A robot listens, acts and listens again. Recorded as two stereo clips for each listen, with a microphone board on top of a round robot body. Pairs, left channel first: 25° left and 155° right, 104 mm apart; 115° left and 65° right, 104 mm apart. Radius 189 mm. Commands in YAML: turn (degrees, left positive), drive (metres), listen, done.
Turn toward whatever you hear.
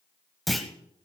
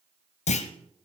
turn: 110
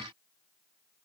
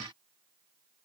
done: "I heard a clunk from this way, but can't make it out now."